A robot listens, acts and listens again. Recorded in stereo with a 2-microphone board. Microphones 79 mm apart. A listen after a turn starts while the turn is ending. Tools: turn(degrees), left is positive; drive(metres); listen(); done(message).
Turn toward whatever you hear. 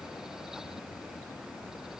listen()
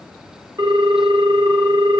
turn(degrees=-65)
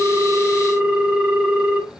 turn(degrees=-30)
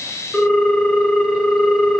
done("Facing the ringtone, under 1 m away.")